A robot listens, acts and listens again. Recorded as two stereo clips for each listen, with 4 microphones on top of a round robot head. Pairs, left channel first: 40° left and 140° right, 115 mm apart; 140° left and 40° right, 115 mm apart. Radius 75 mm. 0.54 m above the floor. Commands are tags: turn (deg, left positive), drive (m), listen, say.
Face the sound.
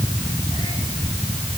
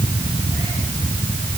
<listen/>
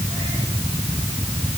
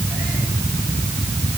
<listen/>
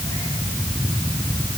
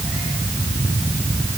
<say>I can't make out anything to turn to.</say>